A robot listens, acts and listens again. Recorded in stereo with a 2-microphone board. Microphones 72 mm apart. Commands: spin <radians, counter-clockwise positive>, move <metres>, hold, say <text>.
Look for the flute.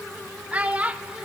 hold
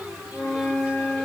spin 0.61
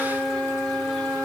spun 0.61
spin 1.92
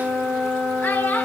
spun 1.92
spin -0.52
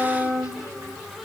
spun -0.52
say Facing the flute, 2 to 4 m away.